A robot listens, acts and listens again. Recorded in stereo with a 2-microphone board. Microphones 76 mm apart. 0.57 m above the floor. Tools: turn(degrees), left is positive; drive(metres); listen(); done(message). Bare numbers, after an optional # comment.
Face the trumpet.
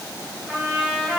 turn(30)
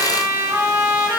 # So it is at 25° right.
turn(-25)
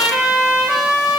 done("Facing the trumpet.")